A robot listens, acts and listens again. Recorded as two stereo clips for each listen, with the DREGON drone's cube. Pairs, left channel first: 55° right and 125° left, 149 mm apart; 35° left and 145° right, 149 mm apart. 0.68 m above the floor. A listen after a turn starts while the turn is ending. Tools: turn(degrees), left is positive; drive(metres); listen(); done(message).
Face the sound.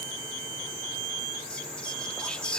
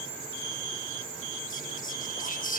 turn(degrees=30)
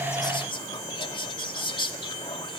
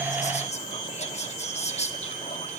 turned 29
done("Facing the whispering, 1 to 2 m away.")